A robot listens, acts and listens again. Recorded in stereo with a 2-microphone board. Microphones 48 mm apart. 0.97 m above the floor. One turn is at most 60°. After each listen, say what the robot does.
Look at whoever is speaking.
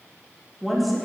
Turn 30° left.
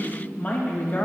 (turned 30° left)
Turn 60° left.
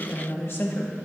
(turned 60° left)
Turn 50° left.
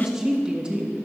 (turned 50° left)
Turn 20° right.
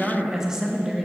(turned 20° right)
Turn 10° right.
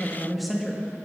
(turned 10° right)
Found it: a woman speaking, straight ahead, 1 to 2 m away.